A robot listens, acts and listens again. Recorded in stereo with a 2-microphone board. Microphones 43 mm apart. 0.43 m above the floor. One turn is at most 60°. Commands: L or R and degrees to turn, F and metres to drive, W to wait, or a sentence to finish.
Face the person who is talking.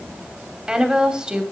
R15
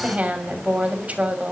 R60
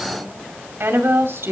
R60
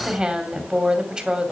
R20
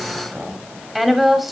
Facing the woman speaking.